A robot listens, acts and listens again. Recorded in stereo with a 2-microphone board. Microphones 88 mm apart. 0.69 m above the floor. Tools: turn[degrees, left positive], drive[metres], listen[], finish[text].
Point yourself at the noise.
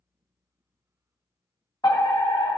Thought: The fire alarm: about 45° left or 135° left.
Action: turn[45]
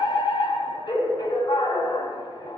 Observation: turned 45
Thought: So it is at 85° left.
Action: turn[85]
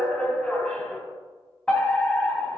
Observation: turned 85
Thought: The fire alarm is now 15° left.
Action: turn[15]
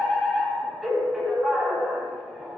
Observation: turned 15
Action: finish[Found it: a fire alarm, straight ahead, 2 to 4 m away.]